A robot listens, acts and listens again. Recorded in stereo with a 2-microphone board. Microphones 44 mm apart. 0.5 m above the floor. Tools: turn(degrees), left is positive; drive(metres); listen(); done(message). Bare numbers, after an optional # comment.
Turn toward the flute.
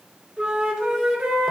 turn(-30)
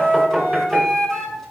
# So it is at 15° left.
turn(15)
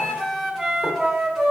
done("Found it: a flute, straight ahead.")